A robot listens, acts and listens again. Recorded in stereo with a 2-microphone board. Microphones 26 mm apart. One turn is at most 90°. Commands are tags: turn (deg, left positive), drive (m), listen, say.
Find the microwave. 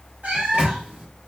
<turn deg="-45"/>
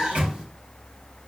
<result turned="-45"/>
<turn deg="-90"/>
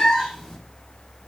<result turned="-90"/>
<listen/>
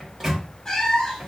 <turn deg="-15"/>
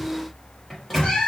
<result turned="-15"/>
<say>Found it: a microwave, straight ahead, 1 to 2 m away.</say>